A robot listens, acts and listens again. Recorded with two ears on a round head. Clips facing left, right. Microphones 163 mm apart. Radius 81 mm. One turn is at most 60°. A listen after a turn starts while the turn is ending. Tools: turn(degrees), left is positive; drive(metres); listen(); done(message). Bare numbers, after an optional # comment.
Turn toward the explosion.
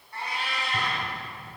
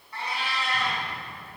# The explosion: about 55° left or 125° left.
turn(55)
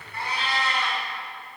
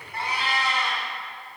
listen()
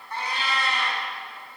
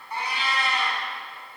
done("I heard an explosion, but can't make it out now. It was about straight ahead or 70° left.")